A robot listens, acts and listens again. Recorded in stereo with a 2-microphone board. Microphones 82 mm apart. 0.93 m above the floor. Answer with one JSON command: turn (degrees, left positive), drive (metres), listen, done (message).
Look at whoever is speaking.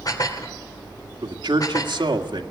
{"turn": -70}
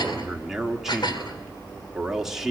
{"done": "Found it: a man speaking, straight ahead, 2 to 4 m away."}